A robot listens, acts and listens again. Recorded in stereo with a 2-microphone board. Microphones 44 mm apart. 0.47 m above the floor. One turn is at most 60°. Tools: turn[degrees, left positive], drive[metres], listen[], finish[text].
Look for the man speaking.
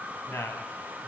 Thought: The man speaking: about 65° left or 115° left.
Action: turn[60]
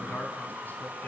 Action: listen[]
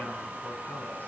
Action: listen[]
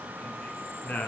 Thought: So it is at 35° left.
Action: turn[35]
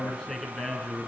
Thought: The man speaking is now 10° left.
Action: turn[10]
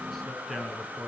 Action: finish[Found it: a man speaking, straight ahead.]